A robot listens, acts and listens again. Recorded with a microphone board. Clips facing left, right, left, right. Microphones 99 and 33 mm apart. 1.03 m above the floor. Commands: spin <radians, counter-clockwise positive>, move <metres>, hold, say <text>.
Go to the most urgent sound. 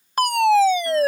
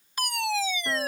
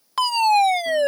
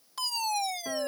spin 0.96
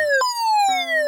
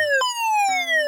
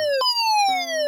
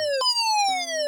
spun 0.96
spin 0.26
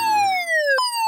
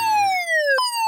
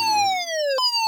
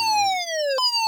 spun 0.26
move 1.0
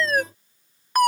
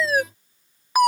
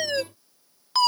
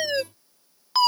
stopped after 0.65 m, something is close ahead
say Blocked. The fire alarm is further on, straight ahead.